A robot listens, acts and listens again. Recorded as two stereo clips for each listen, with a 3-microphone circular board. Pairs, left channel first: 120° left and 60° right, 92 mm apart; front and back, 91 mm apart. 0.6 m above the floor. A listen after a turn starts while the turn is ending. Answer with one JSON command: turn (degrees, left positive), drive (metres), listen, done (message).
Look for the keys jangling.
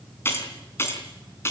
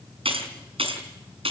{"turn": 180}
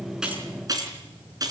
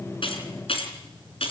{"turn": -10}
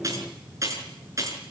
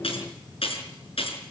{"done": "Facing the keys jangling."}